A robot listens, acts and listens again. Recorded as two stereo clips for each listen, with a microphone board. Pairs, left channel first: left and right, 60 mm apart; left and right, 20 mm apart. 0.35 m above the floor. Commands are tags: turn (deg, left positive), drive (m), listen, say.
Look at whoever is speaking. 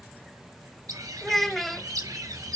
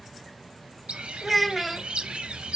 <turn deg="30"/>
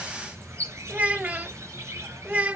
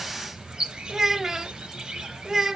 <turn deg="-25"/>
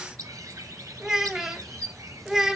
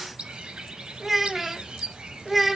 <turn deg="-10"/>
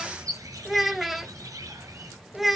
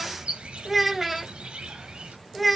<say>Facing the child speaking, under 1 m away.</say>